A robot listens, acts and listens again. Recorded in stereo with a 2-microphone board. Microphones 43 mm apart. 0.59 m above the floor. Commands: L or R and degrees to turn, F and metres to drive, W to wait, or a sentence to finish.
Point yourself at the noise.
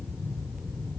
W
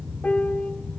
L35
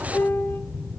L115
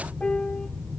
L25
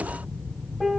Found it: a piano, straight ahead.